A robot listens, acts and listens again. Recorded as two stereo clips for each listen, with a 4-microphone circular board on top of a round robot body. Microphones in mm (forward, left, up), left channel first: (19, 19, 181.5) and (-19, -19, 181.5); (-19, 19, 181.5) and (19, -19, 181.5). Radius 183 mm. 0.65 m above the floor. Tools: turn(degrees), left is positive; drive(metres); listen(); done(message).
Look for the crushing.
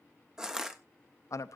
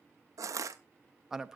turn(degrees=-55)
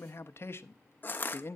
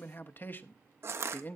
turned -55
turn(degrees=-10)
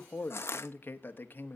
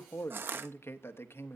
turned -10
done("Found it: crushing, straight ahead.")